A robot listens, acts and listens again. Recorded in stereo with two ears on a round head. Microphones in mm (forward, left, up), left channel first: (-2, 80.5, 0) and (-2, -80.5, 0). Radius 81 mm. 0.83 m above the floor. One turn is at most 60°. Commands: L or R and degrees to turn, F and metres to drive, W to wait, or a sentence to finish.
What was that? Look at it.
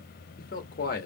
L50
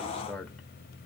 Found it: a man speaking, straight ahead, 1 to 2 m away.